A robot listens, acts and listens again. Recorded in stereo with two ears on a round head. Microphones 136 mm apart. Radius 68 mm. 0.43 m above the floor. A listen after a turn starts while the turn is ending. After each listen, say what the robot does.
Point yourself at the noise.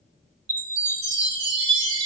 Turn 90° right.
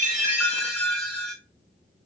Turn 10° left.
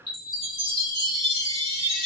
Facing the chime, 1 to 2 m away.